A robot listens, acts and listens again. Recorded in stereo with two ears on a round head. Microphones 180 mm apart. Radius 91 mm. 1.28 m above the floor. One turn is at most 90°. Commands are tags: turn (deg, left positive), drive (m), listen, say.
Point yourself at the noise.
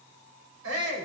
<turn deg="-90"/>
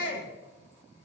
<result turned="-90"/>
<turn deg="-10"/>
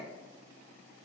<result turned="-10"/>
<listen/>
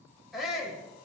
<say>Found it: a shout, straight ahead.</say>